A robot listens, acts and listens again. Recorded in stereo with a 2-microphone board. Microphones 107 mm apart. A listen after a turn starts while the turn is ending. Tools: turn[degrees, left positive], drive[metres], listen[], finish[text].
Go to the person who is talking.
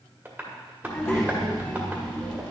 Thought: The child speaking: about 20° left or 160° left.
Action: turn[20]
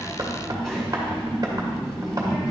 Action: drive[1.0]
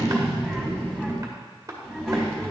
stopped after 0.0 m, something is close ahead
Action: finish[Blocked. The child speaking is further on, straight ahead.]